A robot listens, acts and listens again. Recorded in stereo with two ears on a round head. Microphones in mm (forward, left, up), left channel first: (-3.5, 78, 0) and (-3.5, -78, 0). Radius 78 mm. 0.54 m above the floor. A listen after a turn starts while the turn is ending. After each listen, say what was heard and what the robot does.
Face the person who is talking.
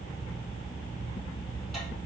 Keep listening.
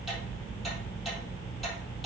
Keep listening.
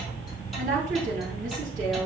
The woman speaking: about 45° right or 135° right. Turn 45° right.
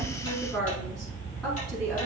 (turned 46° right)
Found it: a woman speaking, straight ahead, 2 to 4 m away.